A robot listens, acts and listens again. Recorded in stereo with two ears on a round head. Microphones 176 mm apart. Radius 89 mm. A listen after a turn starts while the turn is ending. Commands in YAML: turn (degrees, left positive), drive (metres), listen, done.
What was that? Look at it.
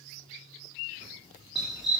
turn: 30
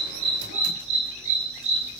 turn: -35
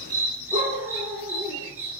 turn: -10
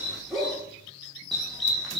done: "Facing the dog barking."